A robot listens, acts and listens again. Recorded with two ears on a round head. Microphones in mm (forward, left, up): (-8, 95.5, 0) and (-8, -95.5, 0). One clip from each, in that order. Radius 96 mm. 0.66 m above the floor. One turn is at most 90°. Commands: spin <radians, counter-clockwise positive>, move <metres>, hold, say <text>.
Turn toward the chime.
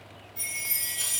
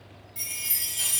spin -0.35
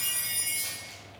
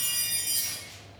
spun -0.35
say Found it: a chime, straight ahead.